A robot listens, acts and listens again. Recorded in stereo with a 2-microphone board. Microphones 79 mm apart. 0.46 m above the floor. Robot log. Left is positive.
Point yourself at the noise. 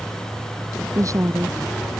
note: The woman speaking: about 45° right or 135° right.
cmd yaw -45
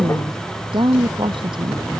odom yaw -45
note: So it is at 90° right.
cmd yaw -90
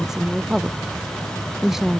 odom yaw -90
end: Facing the woman speaking.